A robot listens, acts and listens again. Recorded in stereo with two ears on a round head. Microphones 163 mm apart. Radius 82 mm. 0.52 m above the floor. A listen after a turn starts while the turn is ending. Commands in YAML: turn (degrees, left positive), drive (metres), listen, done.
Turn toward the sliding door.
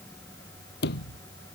turn: 60
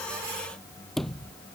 done: "Facing the sliding door."